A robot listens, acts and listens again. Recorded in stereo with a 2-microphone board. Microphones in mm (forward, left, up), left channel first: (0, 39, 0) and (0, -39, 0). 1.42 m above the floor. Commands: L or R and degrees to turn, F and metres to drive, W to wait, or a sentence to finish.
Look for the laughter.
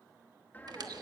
L25
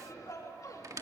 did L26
L130
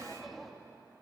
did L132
Found it: laughter, straight ahead.